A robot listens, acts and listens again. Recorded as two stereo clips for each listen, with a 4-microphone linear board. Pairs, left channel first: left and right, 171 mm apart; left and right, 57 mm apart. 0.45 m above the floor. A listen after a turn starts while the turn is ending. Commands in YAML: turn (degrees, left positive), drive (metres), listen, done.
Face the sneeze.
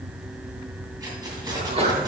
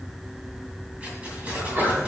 turn: -35
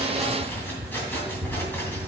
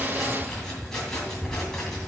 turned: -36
listen: true
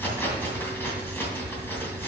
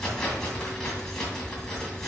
done: "I heard a sneeze, but can't make it out now. It was about straight ahead or 110° right."